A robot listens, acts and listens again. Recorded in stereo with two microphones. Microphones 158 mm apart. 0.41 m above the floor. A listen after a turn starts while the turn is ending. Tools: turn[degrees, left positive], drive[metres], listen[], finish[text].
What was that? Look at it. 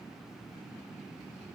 Action: listen[]
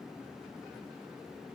Action: listen[]
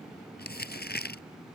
Action: turn[90]
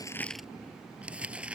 Action: finish[Found it: crumpling, straight ahead.]